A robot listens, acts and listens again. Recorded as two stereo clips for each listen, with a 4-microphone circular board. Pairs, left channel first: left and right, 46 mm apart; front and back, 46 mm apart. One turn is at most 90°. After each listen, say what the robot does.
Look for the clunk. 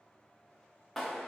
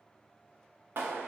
Keep listening.
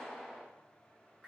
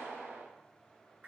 Keep listening.
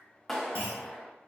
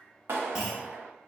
Turn 90° right.
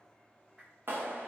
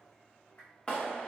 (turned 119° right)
Turn 10° left.
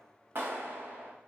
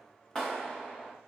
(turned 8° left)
I heard a clunk from this way, but can't make it out now.